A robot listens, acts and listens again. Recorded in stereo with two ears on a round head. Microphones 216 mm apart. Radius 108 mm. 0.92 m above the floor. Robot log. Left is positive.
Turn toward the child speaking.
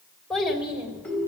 cmd yaw -30
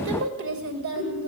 note: So it is at 120° right.
cmd yaw -120
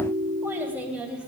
end: Found it: a child speaking, straight ahead.